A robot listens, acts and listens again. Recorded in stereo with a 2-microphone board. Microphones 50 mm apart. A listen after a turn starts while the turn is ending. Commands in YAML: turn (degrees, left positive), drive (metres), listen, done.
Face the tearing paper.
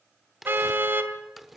turn: -30
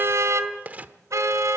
turn: -150
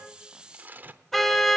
turn: -35
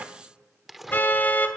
done: "Found it: tearing paper, straight ahead, under 1 m away."